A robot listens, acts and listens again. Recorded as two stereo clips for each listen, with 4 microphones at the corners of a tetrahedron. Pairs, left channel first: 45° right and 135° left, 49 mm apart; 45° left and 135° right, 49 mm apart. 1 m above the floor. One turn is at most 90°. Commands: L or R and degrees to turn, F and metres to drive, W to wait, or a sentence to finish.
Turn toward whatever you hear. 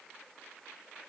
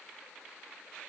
W
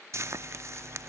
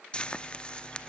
L90
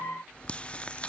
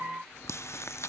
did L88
L25
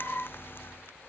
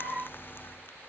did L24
W
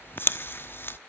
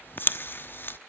Facing the frying.